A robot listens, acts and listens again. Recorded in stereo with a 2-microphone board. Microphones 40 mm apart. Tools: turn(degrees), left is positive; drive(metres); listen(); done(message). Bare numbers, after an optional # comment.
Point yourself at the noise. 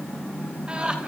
# The laughter: about 25° right or 155° right.
turn(-25)
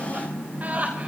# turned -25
# The laughter: about 40° right or 140° right.
turn(-40)
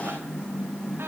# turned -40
listen()
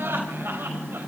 # So it is at 115° right.
turn(-115)
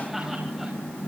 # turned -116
listen()
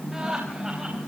# The laughter is now 10° right.
turn(-10)
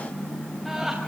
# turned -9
done("Found it: laughter, straight ahead, over 4 m away.")